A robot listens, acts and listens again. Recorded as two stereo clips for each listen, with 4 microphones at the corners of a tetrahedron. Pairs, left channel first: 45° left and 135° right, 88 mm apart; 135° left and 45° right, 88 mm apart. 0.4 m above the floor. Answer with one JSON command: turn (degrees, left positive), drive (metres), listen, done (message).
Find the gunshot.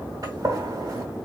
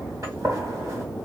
{"turn": -95}
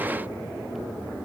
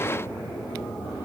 {"done": "Facing where the gunshot came from. I can't hear it now."}